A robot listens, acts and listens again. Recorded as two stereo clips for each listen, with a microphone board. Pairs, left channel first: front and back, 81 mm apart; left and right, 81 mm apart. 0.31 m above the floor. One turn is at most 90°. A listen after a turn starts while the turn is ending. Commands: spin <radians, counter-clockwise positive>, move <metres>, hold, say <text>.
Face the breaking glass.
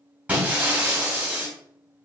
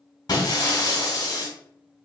spin 1.57
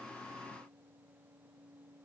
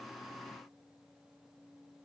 spin 0.35
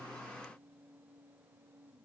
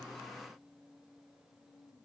say Facing where the breaking glass came from. I can't hear it now.